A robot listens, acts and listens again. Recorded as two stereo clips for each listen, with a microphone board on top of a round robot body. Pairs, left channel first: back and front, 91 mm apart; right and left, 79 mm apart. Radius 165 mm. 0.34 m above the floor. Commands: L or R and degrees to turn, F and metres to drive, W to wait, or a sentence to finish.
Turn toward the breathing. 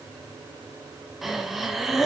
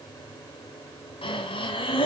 R90
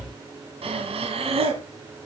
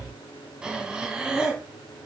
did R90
L10
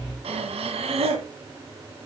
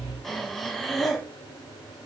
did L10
Found it: breathing, straight ahead, 1 to 2 m away.